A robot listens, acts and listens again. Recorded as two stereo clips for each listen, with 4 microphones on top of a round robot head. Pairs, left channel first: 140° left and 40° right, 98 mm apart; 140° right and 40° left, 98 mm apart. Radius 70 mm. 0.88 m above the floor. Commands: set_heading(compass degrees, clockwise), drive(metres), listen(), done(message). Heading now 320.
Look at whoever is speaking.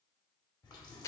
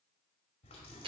listen()
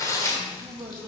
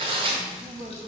set_heading(295)
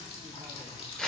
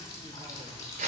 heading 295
listen()
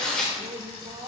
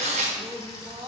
done("Facing the man speaking, 1 to 2 m away.")